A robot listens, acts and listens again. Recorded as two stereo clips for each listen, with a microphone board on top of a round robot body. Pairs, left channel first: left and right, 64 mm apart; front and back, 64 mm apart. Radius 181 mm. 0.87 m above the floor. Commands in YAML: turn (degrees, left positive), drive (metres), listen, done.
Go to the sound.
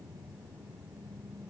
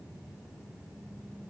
listen: true
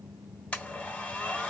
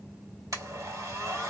turn: 160
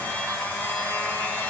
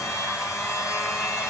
turn: 30
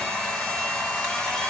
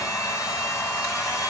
turn: 20
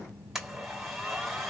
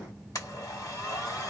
drive: 1.0
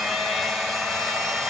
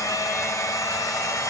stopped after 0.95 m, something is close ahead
done: "Arrived at the blender, straight ahead."